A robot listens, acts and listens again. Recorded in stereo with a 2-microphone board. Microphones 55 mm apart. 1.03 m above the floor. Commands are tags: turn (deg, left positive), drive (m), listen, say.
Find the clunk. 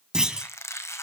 <turn deg="-30"/>
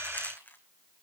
<listen/>
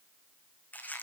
<say>I heard a clunk, but can't make it out now. It was about 20° left or 140° right.</say>